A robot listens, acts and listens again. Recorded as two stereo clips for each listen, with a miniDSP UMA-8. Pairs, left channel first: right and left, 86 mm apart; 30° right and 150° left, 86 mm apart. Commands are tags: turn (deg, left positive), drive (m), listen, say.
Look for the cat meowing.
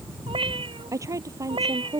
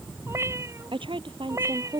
<turn deg="100"/>
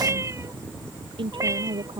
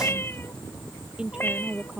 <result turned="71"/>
<turn deg="35"/>
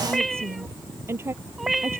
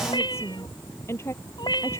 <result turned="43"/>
<say>Facing the cat meowing.</say>